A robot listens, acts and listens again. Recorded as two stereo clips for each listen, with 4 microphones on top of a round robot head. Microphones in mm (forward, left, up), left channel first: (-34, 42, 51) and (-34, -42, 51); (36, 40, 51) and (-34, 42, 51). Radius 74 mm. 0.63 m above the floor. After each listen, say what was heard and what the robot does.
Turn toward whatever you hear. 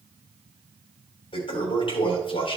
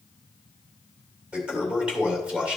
The toilet flushing: 105° left. Turn 105° left.
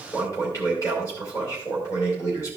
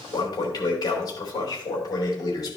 The toilet flushing is now 30° left. Turn 30° left.
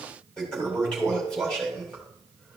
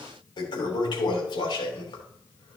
The toilet flushing is now 10° left. Turn 10° left.
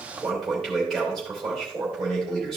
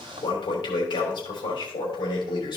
Facing the toilet flushing.